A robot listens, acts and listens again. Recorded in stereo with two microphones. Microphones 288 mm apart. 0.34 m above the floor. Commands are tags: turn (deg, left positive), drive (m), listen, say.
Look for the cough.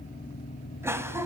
<turn deg="-30"/>
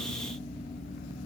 <listen/>
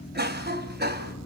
<turn deg="-140"/>
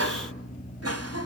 <turn deg="-65"/>
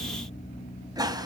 <turn deg="-15"/>
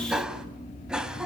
<say>Found it: a cough, straight ahead.</say>